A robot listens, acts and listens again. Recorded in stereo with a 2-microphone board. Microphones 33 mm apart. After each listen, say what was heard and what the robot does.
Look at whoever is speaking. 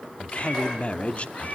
The man speaking: about 40° left or 140° left. Turn 40° left.
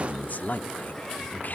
So it is at 90° left. Turn 90° left.
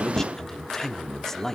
The man speaking is now 15° left. Turn 15° left.
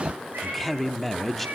Facing the man speaking, 1 to 2 m away.